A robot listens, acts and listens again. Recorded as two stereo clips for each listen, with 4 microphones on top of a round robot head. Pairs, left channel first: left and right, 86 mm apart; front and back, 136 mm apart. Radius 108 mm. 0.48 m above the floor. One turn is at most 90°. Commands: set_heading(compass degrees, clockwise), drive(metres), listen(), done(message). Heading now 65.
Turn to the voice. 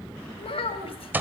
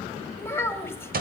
set_heading(350)
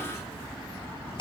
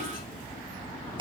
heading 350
listen()
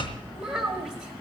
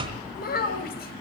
done("Facing the child speaking, 1 to 2 m away.")